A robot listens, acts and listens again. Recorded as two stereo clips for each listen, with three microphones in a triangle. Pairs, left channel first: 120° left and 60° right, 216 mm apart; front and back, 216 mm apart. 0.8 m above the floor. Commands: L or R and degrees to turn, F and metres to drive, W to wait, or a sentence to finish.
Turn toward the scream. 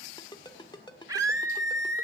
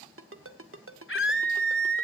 L15
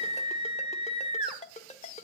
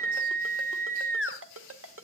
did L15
Facing the scream.